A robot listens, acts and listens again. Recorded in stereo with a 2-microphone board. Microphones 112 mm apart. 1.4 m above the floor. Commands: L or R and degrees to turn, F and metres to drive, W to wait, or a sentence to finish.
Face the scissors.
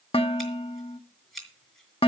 L30
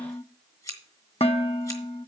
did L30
L150
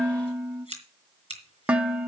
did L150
L55
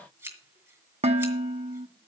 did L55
R20
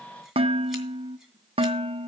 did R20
W
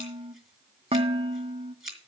Facing the scissors.